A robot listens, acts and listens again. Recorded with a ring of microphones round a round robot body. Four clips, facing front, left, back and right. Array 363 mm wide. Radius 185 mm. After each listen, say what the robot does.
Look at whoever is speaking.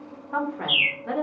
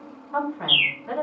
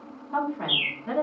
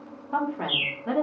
Turn 70° right.
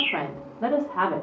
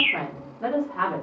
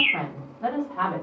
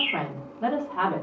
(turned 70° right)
Turn 20° right.
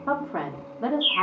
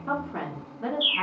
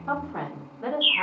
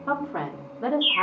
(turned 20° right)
Turn 30° right.
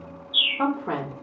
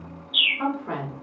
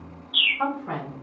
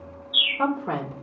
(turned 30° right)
Turn 40° right.
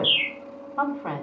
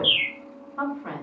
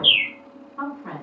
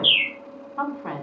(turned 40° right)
Turn 15° right.
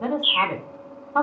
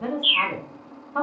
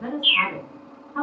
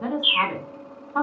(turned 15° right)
Found it: a woman speaking, straight ahead.